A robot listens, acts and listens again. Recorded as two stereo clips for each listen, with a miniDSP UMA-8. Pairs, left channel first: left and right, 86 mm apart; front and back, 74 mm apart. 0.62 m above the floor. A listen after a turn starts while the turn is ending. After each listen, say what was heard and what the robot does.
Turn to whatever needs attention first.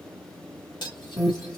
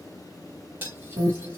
The alarm: 170° right. Turn 170° right.
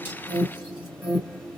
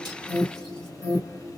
The alarm is now 15° right. Turn 15° right.
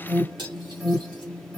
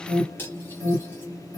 Facing the alarm, 1 to 2 m away.